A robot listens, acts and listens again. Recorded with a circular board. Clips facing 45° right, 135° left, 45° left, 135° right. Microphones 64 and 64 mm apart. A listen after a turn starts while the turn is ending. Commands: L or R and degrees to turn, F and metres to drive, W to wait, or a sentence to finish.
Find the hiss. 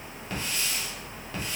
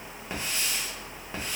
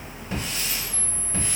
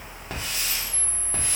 R155
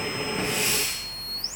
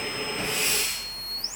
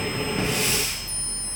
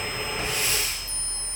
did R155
W
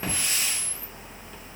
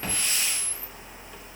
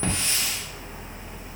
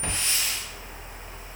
L35
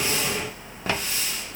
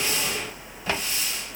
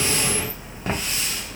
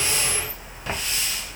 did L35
R10
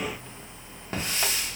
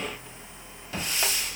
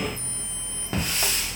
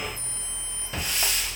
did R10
Found it: a hiss, straight ahead, 1 to 2 m away.